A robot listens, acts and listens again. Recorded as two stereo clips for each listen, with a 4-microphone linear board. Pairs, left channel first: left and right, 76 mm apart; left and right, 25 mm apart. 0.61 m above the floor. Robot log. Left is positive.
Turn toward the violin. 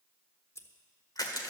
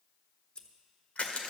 cmd idle
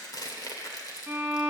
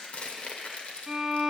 note: The violin: about 25° right or 155° right.
cmd yaw -25
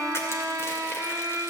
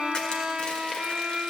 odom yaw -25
note: So it is at 130° right.
cmd yaw -130
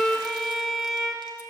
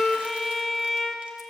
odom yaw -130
end: Facing the violin, 1 to 2 m away.